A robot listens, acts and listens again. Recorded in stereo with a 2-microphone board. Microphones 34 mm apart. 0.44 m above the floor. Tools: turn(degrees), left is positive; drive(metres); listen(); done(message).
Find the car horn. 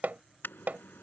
turn(degrees=90)
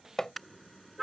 done("Found it: a car horn, straight ahead.")